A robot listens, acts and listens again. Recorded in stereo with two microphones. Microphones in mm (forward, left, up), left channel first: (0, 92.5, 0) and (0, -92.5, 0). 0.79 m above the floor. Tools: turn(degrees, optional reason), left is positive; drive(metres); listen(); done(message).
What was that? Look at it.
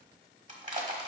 turn(degrees=-45, reason="The crushing: about 45° right or 135° right.")
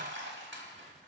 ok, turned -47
turn(degrees=-90, reason="So it is at 90° right.")
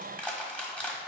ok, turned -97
done("Found it: crushing, straight ahead, 1 to 2 m away.")